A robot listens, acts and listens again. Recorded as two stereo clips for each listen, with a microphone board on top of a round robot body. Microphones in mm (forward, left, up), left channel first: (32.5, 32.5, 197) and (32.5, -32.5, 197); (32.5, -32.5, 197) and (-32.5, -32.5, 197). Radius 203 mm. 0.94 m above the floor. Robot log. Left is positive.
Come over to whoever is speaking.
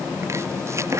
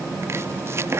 cmd idle
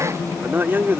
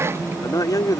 note: The man speaking: 30° right.
cmd yaw -30
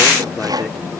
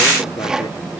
cmd idle
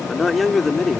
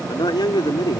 cmd fwd 1.0
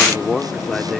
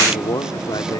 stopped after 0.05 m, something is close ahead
end: Blocked. The man speaking is further on, straight ahead.